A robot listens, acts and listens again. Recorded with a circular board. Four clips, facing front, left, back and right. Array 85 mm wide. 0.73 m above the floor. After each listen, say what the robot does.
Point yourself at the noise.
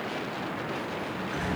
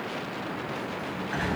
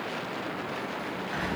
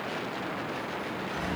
Turn 100° left.
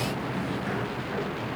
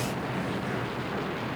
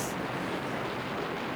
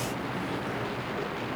Found it: a sliding door, straight ahead.